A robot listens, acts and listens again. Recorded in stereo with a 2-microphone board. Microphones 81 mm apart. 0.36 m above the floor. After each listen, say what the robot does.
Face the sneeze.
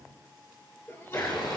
Turn 40° left.
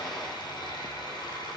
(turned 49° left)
Keep listening.
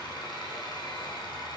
I heard a sneeze, but can't make it out now. It was about 10° right or 90° left.